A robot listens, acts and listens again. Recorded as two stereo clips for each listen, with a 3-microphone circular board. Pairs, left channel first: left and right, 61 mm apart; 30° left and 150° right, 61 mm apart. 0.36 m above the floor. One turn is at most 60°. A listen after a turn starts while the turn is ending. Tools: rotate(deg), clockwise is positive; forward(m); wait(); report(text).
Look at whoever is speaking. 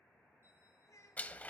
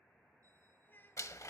rotate(-60)
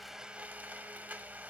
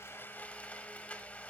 rotate(-20)
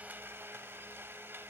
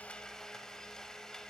wait()
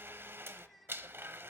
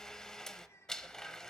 report("Found it: a child speaking, straight ahead.")